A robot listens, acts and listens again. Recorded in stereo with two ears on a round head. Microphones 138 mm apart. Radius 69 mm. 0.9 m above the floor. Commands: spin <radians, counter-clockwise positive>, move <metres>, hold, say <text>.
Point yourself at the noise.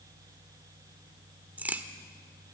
spin -0.52
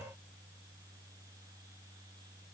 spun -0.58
hold
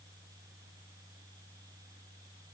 say I heard a crack, but can't make it out now. It was about 20° left or 135° right.